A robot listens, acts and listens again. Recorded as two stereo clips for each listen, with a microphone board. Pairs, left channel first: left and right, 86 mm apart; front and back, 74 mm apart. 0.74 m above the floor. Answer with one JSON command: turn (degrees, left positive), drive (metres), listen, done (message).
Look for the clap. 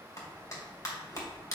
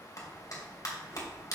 {"turn": 40}
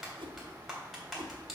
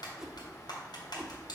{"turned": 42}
{"done": "Found it: a clap, straight ahead, 2 to 4 m away."}